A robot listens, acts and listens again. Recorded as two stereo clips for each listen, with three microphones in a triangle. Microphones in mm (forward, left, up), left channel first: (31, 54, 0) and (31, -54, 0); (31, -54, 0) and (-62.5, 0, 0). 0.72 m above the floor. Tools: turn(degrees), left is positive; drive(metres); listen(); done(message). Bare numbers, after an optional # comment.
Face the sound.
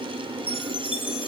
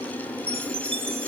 # The chime: 120° left.
turn(120)
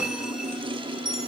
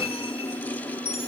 done("Facing the chime, 1 to 2 m away.")